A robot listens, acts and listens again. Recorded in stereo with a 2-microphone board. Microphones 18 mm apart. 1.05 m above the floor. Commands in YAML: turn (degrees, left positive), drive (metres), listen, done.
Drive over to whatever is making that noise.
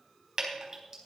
turn: -30
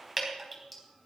drive: 1.0
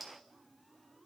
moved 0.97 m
listen: true
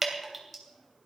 drive: 1.0
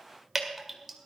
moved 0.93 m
drive: 1.0
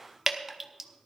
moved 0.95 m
turn: -15
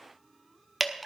drive: 1.0
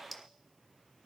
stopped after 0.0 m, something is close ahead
listen: true
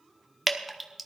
done: "Arrived at the dripping, straight ahead."